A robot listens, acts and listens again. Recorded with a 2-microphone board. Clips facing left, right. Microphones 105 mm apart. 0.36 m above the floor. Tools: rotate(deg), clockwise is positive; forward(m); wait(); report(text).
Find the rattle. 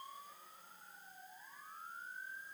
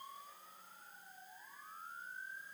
wait()
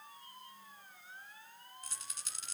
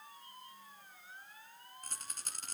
rotate(50)
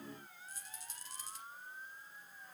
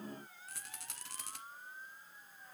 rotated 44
rotate(85)
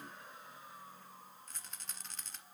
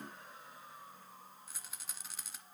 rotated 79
report("Facing the rattle, 1 to 2 m away.")